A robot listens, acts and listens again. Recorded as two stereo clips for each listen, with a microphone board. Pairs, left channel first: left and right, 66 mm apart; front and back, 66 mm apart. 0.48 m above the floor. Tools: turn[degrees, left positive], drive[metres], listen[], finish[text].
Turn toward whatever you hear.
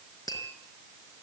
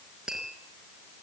Thought: The tapping: 100° left.
Action: turn[100]
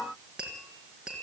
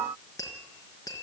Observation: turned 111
Thought: The tapping is now 10° right.
Action: turn[-10]
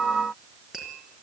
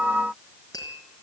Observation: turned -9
Action: finish[Found it: tapping, straight ahead.]